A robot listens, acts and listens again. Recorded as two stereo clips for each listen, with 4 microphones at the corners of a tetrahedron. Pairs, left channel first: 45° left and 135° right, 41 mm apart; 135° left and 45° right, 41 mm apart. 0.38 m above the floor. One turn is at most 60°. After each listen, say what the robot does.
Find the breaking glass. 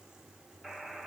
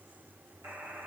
Keep listening.
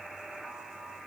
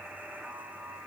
Keep listening.
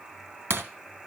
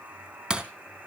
Turn 60° right.
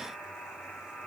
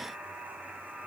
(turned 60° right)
Turn 50° right.
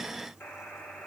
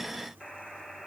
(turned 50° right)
I heard breaking glass from this way, but can't make it out now.